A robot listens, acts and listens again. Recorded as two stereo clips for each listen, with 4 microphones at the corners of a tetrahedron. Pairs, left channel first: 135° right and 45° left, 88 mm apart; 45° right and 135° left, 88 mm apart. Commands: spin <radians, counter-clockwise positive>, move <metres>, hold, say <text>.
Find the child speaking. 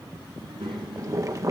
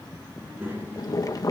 spin 1.22
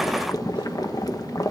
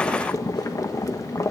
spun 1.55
spin -0.35
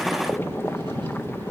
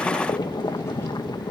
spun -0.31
hold
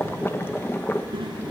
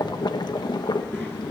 spin 0.35
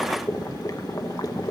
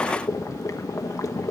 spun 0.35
hold
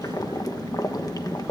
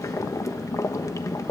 say Facing the child speaking.